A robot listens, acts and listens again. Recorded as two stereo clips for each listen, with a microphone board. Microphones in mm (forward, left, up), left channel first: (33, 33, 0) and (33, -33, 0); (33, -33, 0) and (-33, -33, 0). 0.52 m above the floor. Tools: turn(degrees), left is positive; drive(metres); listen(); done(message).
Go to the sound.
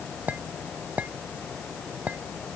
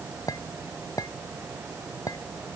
turn(degrees=-25)
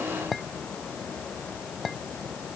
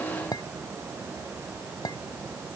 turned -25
drive(metres=1.0)
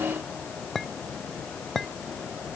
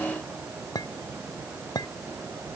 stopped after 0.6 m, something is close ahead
done("Something is in my way. I am facing the clink but have not reached it.")